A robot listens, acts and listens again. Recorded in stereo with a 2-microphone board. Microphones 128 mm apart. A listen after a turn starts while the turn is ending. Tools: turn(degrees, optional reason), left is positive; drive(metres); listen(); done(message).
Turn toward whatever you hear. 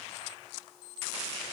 listen()
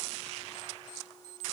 listen()
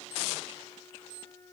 turn(degrees=25, reason="The flute: about 25° left or 155° left.")
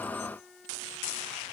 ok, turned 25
done("Found it: a flute, straight ahead, under 1 m away.")